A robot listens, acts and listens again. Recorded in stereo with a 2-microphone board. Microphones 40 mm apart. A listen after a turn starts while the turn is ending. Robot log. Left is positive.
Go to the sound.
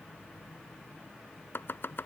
note: The chopping: about 70° left or 110° left.
cmd yaw +70
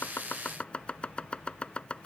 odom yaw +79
note: So it is at 30° left.
cmd yaw +30
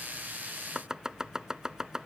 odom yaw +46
note: The chopping is now 15° right.
cmd yaw -15
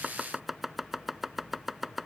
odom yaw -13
cmd fwd 1.0
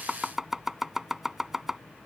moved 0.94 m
note: The chopping is now 10° right.
cmd yaw -10
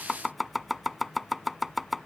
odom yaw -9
cmd fwd 1.0
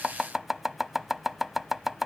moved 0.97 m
cmd fwd 1.0
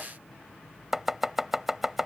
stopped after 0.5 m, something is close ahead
note: The chopping is now 10° right.
cmd yaw -10
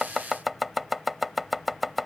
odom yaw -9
end: Arrived at the chopping, straight ahead.